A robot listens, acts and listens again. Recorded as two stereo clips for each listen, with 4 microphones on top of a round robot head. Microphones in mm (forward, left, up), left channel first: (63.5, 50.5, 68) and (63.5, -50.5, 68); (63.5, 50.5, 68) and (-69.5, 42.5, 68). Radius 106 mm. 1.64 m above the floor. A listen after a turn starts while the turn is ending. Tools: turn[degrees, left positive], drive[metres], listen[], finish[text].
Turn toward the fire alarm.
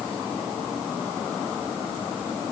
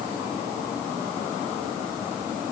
Action: listen[]
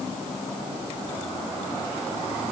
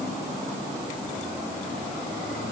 Action: listen[]
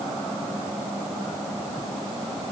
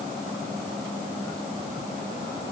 Action: finish[I can't make out a fire alarm.]